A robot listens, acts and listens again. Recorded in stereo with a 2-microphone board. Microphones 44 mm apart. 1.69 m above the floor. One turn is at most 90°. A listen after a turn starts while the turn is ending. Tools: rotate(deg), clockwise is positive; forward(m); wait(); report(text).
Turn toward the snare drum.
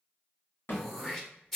rotate(-55)
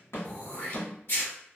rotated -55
rotate(-70)
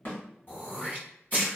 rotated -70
wait()
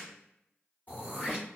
wait()
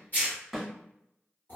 report("Found it: a snare drum, straight ahead, 1 to 2 m away.")